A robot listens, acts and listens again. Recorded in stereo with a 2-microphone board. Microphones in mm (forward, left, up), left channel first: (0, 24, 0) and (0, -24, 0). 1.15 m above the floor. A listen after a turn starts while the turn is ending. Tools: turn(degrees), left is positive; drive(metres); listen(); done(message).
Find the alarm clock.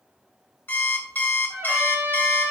turn(degrees=45)
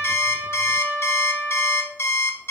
turn(degrees=80)
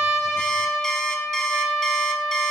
listen()
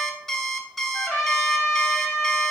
turn(degrees=10)
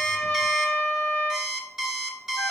turn(degrees=-10)
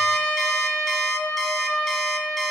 listen()
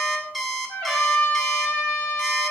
done("Facing the alarm clock, 1 to 2 m away.")